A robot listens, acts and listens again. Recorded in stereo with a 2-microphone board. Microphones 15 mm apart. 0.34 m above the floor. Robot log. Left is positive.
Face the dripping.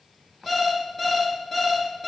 cmd idle
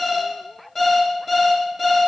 cmd idle
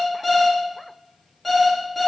end: I can't make out dripping, only an alarm clock.